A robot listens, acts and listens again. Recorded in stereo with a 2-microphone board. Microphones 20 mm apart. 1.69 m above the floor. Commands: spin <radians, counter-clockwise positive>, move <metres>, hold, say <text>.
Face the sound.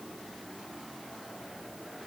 hold
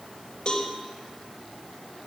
spin 0.61
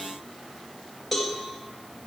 say Found it: a cowbell, straight ahead.